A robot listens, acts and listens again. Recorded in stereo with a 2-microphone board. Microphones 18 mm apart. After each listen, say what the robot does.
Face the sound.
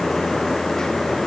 Keep listening.
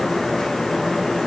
Keep listening.
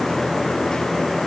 I can't make out anything.